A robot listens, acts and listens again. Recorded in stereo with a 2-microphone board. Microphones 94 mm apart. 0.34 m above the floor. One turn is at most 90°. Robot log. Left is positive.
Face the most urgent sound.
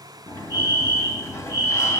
note: The fire alarm: about 45° left or 135° left.
cmd yaw +45
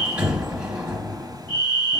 note: So it is at 75° left.
cmd yaw +75
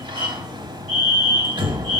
note: The fire alarm is now 15° left.
cmd yaw +15
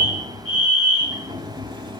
end: Facing the fire alarm, 2 to 4 m away.